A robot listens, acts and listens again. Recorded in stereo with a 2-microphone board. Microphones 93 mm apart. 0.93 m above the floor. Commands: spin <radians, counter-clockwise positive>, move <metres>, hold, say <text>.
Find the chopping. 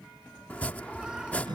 spin 0.26
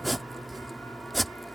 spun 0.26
say Found it: chopping, straight ahead.